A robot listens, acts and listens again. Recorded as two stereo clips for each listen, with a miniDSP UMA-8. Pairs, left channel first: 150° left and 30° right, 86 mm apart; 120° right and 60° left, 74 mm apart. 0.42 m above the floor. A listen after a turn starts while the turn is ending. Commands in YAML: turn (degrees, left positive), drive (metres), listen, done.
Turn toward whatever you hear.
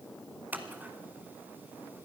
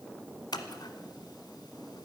turn: -100
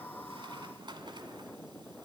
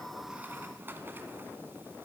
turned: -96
listen: true
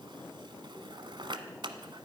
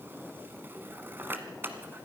done: "Found it: scissors, straight ahead."